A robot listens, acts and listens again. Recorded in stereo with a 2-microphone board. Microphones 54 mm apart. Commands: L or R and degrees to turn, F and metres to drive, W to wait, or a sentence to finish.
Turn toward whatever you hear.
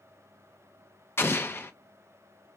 L45
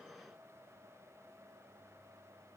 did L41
W
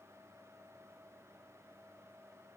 I heard an explosion, but can't make it out now. It was about 5° left or 95° left.